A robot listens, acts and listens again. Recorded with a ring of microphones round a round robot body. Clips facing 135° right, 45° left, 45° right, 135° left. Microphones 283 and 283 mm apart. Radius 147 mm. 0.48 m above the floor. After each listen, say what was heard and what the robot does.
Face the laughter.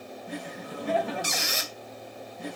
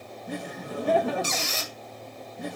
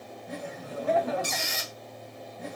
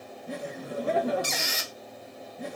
The laughter: 85° left. Turn 85° left.
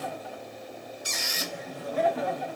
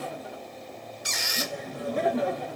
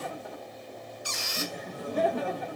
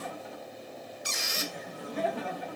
Found it: laughter, straight ahead.